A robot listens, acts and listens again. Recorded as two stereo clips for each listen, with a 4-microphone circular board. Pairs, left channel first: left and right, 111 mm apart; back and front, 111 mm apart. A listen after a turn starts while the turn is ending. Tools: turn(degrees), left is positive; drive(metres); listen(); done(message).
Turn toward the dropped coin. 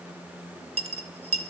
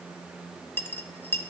turn(degrees=-110)
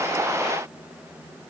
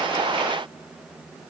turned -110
done("Facing where the dropped coin came from. I can't hear it now.")